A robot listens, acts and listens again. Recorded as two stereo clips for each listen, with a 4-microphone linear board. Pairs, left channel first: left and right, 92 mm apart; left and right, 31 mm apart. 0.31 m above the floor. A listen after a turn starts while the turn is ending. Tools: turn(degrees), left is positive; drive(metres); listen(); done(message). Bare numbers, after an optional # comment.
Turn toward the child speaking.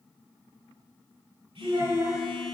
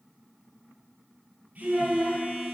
# The child speaking: about 25° right or 155° right.
turn(-25)
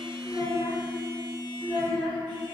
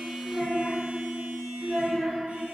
# So it is at 135° right.
turn(-135)
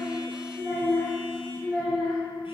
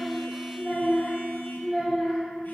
done("Facing the child speaking, 2 to 4 m away.")